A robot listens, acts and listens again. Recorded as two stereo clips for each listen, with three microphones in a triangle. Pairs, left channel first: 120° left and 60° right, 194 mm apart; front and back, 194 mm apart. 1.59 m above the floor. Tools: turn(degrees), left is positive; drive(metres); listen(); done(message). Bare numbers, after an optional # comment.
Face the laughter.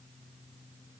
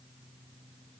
listen()
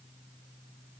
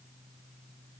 listen()
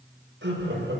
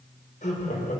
# The laughter: 50° right.
turn(-50)
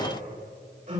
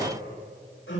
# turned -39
# The laughter is now 10° right.
turn(-10)
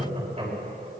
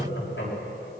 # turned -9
done("Facing the laughter, over 4 m away.")